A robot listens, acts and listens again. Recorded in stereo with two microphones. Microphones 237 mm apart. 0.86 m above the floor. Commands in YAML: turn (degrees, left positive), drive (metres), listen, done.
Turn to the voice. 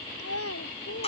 turn: 90
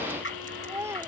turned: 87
turn: -10
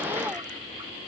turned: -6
listen: true
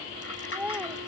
done: "Found it: a child speaking, straight ahead."